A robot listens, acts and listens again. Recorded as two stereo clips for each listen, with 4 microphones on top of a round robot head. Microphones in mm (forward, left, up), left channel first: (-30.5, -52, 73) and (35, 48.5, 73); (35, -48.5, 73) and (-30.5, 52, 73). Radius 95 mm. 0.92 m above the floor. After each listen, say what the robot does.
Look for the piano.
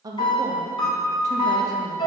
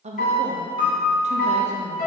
Turn 70° right.
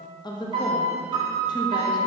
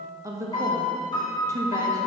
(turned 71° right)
Found it: a piano, straight ahead.